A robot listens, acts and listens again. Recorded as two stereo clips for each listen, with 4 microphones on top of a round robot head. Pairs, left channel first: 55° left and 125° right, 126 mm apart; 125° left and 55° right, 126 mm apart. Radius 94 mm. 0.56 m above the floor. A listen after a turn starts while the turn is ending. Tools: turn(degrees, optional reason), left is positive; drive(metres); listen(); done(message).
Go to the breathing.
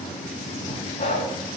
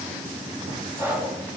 turn(degrees=15, reason="The breathing: 15° left.")
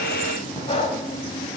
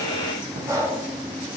drive(metres=1.0)
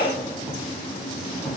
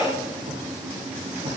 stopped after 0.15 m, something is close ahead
turn(degrees=10, reason="The breathing is now 10° left.")
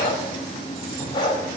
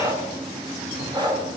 done("Something is in my way. I am facing the breathing but have not reached it.")